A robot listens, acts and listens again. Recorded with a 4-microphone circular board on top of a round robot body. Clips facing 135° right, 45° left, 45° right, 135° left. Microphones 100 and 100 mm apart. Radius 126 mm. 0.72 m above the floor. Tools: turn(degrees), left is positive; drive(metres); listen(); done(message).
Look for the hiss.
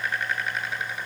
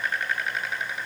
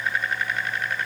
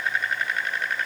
listen()
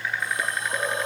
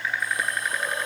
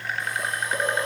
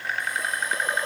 turn(degrees=-70)
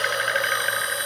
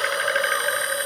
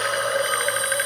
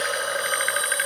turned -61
turn(degrees=-10)
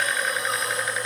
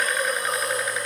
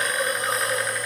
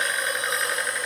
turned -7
done("Found it: a hiss, straight ahead.")